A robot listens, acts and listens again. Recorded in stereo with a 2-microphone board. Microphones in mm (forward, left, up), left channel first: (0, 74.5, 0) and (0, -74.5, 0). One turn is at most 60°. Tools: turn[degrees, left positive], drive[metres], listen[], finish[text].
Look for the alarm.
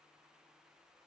Action: listen[]
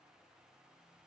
Action: listen[]
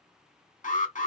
Thought: The alarm: about 65° left or 115° left.
Action: turn[60]
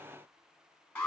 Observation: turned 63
Thought: So it is at 15° left.
Action: turn[15]
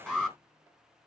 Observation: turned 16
Action: finish[Found it: an alarm, straight ahead.]